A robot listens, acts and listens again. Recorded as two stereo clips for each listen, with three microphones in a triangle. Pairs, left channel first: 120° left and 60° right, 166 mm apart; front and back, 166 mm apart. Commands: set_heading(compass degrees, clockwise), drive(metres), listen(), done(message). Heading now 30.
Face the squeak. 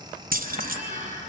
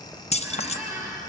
set_heading(135)
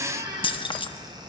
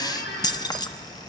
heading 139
done("Facing the squeak, over 4 m away.")